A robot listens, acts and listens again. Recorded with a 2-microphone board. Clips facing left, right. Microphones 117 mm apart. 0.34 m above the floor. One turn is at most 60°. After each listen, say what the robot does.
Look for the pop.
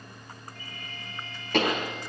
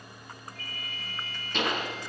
Turn 60° left.
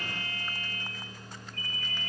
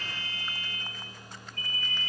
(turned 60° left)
Keep listening.
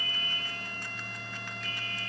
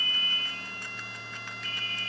I heard a pop, but can't make it out now. It was about straight ahead or 60° left.